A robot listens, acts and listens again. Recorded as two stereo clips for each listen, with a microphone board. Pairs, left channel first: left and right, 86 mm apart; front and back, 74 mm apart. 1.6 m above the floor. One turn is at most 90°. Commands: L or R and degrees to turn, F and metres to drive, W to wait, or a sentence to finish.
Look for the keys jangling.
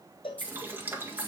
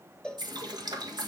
L90
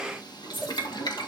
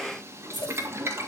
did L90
L90
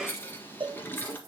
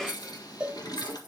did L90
W
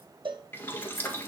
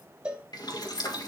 W
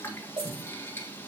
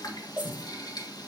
Facing where the keys jangling came from. I can't hear it now.